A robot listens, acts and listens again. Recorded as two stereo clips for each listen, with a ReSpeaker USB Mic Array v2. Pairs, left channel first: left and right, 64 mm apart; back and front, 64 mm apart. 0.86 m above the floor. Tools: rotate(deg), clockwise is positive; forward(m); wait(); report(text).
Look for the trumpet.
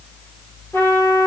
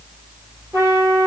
rotate(-40)
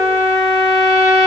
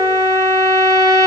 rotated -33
rotate(-10)
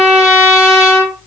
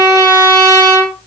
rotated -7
report("Facing the trumpet, 2 to 4 m away.")